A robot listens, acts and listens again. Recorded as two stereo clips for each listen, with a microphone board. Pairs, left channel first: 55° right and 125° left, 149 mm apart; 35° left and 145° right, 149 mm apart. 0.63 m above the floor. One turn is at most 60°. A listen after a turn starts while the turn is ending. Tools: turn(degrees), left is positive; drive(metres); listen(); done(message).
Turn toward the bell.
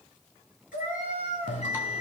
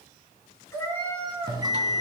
turn(degrees=-60)
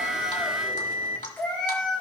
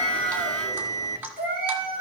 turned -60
turn(degrees=-30)
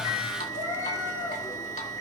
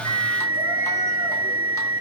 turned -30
turn(degrees=10)
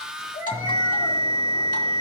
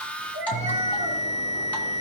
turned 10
done("Facing the bell, 1 to 2 m away.")